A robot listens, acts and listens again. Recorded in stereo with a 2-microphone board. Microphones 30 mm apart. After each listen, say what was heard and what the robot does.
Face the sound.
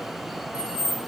The keys jangling: about 55° right or 125° right. Turn 55° right.
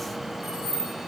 So it is at 65° right. Turn 65° right.
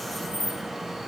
The keys jangling is now 65° right. Turn 65° right.
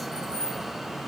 The keys jangling is now 30° right. Turn 30° right.
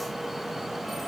Keep listening.
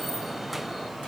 Keep listening.
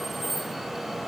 Facing the keys jangling, 2 to 4 m away.